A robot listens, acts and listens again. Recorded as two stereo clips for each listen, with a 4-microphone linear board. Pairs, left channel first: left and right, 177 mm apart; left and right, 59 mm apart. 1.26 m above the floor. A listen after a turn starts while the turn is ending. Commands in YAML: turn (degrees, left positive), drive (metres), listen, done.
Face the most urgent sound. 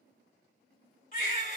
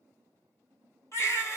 turn: 50
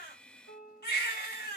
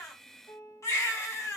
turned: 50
turn: 75
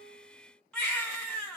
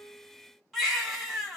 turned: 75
done: "Found it: a baby crying, straight ahead, 1 to 2 m away."